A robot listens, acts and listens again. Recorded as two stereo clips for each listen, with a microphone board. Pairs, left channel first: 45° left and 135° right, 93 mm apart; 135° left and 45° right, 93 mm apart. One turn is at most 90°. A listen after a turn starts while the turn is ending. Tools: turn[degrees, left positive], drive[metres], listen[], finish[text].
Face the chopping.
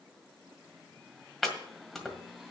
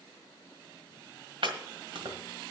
Thought: The chopping: 40° right.
Action: turn[-40]
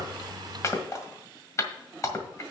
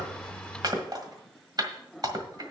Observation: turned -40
Thought: The chopping is now 10° right.
Action: turn[-10]
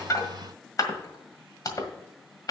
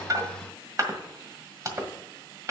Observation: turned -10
Action: finish[Facing the chopping.]